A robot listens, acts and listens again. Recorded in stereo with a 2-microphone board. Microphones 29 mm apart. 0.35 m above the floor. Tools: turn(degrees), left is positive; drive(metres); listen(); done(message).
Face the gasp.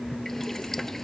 listen()
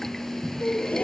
turn(degrees=60)
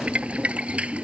listen()
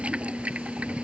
done("I heard a gasp, but can't make it out now. It was about straight ahead or 60° left.")